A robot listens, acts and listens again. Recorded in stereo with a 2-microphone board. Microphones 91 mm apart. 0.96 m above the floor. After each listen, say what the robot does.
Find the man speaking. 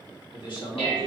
Turn 65° left.
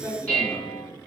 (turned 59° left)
Turn 40° left.
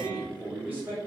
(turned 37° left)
Turn 25° right.
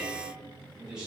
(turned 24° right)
Turn 10° right.
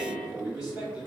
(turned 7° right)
Turn 10° right.
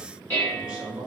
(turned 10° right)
Found it: a man speaking, straight ahead.